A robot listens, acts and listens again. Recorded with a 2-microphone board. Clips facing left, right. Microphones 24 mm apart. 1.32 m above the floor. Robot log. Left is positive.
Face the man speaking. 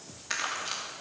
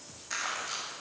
cmd idle
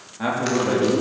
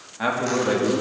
note: The man speaking: about 15° right or 165° right.
cmd yaw -15
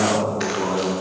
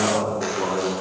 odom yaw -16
cmd yaw +30
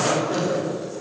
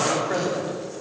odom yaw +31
note: So it is at 35° right.
cmd yaw -35
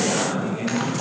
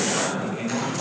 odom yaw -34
end: Found it: a man speaking, straight ahead, over 4 m away.